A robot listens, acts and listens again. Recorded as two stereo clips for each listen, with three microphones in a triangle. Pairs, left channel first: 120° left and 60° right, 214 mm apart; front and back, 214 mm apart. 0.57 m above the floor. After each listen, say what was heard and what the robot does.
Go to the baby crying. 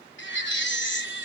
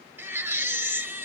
The baby crying: 100° left. Turn 100° left.
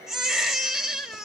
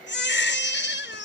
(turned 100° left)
The baby crying is now 30° left. Turn 30° left.
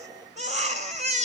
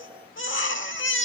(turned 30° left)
Drive 1.0 m forward.
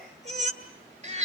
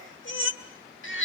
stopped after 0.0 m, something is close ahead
Something is in my way. I am facing the baby crying but have not reached it.